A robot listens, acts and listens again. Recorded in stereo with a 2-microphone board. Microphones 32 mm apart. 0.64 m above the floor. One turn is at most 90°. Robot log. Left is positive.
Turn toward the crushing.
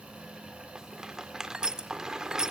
note: The crushing: about 25° right or 155° right.
cmd yaw -25
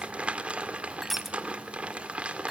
end: Found it: crushing, straight ahead.